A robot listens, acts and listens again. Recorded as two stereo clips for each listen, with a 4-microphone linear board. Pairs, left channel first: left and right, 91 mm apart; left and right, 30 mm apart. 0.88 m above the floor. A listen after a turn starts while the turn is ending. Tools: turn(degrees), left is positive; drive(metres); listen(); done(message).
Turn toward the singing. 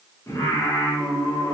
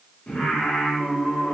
turn(degrees=35)
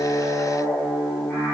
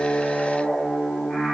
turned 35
turn(degrees=10)
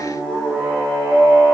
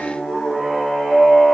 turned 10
done("Facing the singing.")